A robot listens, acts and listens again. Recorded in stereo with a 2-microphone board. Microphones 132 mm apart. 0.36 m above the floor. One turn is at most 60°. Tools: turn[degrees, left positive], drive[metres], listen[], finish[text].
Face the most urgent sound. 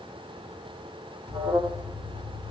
Thought: The alarm: about 60° right or 120° right.
Action: turn[-60]
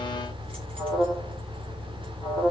Thought: So it is at 10° right.
Action: turn[-10]
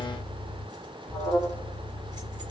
Action: finish[Facing the alarm, 2 to 4 m away.]